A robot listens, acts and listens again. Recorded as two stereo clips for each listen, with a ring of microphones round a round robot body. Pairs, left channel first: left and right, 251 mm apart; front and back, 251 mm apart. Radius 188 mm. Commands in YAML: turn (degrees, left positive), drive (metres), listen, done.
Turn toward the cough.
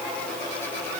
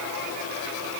listen: true
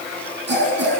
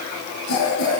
turn: -45
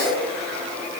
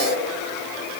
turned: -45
listen: true
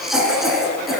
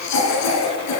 done: "Facing the cough, over 4 m away."